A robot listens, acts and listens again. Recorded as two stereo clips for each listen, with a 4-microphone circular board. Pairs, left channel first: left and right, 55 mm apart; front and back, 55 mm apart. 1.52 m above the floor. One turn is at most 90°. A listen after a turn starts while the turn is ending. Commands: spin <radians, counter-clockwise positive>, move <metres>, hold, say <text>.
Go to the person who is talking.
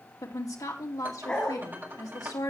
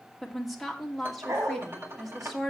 spin 1.57
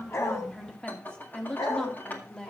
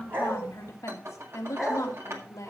spin 0.26
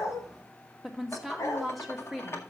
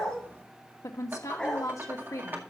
move 1.0
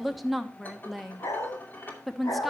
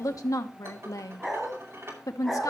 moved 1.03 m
move 1.0
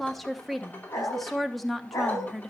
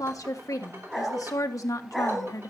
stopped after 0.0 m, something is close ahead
say I am next to the woman speaking.